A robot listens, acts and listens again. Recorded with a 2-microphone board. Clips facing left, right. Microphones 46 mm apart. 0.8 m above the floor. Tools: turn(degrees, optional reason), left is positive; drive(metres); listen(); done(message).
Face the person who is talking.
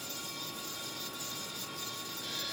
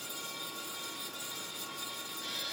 listen()
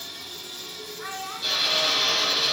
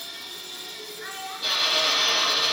turn(degrees=90)
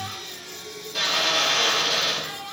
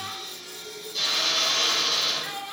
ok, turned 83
turn(degrees=10, reason="So it is at 10° left.")
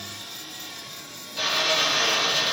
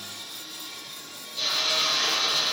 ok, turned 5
listen()
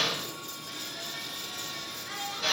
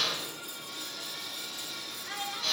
done("Found it: a child speaking, straight ahead, over 4 m away.")